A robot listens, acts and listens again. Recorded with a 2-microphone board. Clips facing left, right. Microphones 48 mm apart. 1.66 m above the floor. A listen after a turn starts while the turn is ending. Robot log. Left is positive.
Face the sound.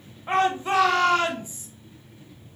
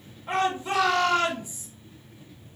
note: The shout: about 35° left or 145° left.
cmd yaw +35
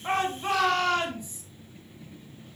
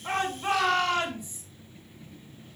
end: Found it: a shout, straight ahead.